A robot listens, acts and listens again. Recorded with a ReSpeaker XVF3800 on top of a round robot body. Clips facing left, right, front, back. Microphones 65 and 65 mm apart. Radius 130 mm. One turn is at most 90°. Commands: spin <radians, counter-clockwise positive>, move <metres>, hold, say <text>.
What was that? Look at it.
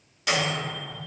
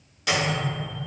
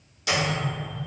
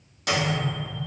spin 1.57
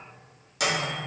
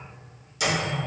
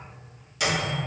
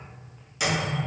spin 1.57
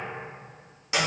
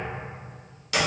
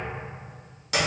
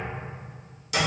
spin 0.44
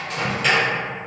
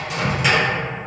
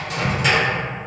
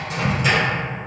spin -0.17
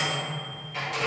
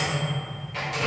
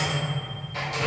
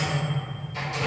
say Found it: a microwave, straight ahead.